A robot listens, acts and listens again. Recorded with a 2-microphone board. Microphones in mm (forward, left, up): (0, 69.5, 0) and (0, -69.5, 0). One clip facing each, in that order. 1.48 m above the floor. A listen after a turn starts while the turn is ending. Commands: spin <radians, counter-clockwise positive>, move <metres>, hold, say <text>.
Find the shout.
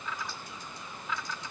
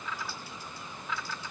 hold
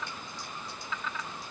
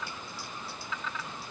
hold
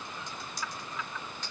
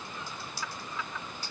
say I can't make out a shout, only typing on a keyboard.